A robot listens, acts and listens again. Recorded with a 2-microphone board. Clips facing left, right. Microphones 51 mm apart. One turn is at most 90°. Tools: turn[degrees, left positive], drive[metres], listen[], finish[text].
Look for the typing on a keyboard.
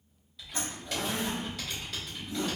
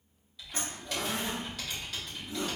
Action: turn[30]
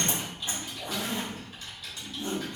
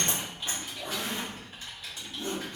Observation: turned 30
Thought: So it is at 30° right.
Action: turn[-30]
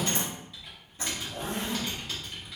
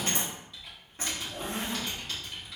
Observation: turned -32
Action: finish[Facing the typing on a keyboard.]